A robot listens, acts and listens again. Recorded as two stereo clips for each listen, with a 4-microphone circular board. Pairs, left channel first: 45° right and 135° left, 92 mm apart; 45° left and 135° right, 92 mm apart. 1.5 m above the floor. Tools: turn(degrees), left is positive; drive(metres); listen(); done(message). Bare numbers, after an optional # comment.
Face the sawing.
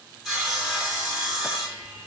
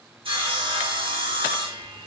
# The sawing: 135° right.
turn(-135)
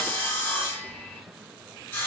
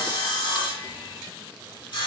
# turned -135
# The sawing is now 25° left.
turn(25)
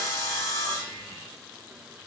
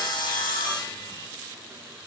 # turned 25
# The sawing is now 10° left.
turn(10)
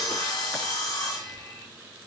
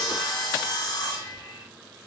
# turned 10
done("Found it: sawing, straight ahead.")